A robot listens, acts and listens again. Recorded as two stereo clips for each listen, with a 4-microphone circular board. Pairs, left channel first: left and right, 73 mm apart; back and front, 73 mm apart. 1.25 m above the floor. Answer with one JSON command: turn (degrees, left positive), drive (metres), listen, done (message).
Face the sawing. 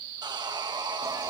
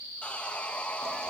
{"turn": -105}
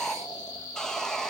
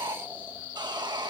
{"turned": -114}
{"turn": 10}
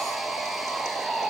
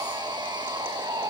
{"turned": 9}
{"done": "Facing the sawing, 1 to 2 m away."}